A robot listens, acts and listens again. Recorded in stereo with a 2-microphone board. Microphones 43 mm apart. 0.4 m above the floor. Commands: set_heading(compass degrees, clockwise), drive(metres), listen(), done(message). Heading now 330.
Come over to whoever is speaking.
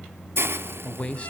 set_heading(300)
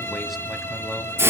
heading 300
listen()
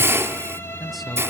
drive(1.0)
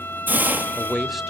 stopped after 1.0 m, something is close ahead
done("I am next to the man speaking.")